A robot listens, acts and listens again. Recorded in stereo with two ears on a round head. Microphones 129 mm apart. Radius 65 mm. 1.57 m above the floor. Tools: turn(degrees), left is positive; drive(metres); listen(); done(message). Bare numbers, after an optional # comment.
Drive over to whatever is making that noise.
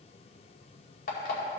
# The alarm clock: about 65° left or 115° left.
turn(65)
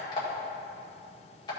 # So it is at 35° left.
turn(35)
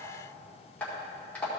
# The alarm clock is now 10° left.
turn(10)
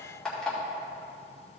drive(1.0)
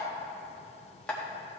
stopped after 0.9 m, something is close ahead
# The alarm clock is now 10° left.
turn(10)
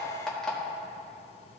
done("Arrived at the alarm clock, straight ahead.")